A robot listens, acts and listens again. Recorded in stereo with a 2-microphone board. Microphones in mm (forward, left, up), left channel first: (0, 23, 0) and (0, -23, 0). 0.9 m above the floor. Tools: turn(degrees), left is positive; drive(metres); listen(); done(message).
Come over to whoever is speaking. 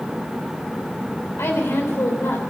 turn(degrees=65)
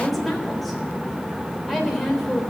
drive(metres=1.0)
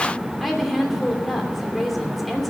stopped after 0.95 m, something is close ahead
done("Something is in my way. I am facing the woman speaking but have not reached it.")